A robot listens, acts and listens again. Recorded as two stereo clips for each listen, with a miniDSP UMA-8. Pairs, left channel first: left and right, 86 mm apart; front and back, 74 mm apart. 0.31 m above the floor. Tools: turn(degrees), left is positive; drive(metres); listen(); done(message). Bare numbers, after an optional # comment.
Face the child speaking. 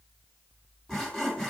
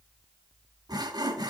listen()
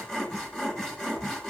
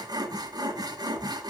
listen()
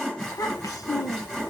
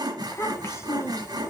# The child speaking: 45° left.
turn(45)
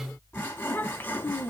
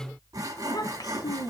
# The child speaking is now 25° left.
turn(25)
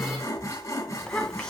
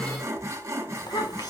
# The child speaking is now 10° left.
turn(10)
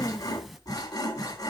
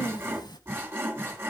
done("Found it: a child speaking, straight ahead.")